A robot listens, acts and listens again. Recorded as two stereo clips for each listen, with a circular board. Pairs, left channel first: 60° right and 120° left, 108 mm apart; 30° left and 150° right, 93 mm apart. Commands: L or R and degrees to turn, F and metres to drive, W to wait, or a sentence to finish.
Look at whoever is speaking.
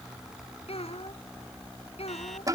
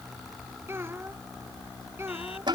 R85
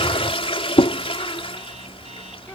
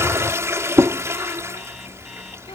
W
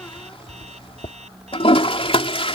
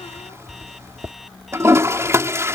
W
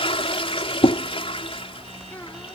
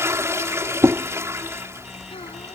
I heard a child speaking from this way, but can't make it out now.